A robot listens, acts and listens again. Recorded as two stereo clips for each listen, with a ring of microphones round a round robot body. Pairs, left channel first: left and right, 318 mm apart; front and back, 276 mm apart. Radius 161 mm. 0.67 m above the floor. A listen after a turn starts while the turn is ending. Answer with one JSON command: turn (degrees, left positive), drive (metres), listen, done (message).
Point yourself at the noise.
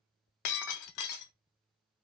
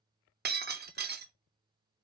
{"turn": 125}
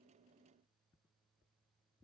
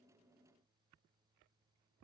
{"done": "I heard breaking glass from this way, but can't make it out now."}